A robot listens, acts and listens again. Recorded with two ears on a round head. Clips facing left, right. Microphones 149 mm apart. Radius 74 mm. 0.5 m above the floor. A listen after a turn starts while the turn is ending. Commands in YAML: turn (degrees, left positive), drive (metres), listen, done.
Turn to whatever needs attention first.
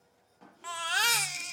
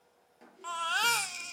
turn: 30
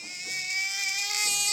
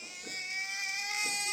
turn: 135
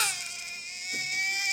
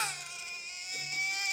turn: 15
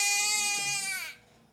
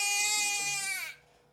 done: "Facing the baby crying, under 1 m away."